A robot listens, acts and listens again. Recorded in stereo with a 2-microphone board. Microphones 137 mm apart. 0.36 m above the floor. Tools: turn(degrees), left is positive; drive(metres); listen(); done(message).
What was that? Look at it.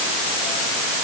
listen()
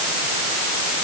listen()
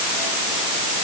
done("I can't make out anything.")